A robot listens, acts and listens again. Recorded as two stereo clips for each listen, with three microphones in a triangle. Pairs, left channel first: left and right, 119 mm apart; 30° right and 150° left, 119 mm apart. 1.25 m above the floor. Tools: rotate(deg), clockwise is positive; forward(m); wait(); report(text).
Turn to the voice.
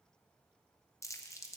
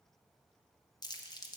wait()
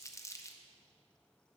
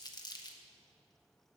wait()
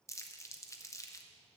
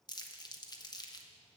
report("I can't make out anyone speaking, only crumpling.")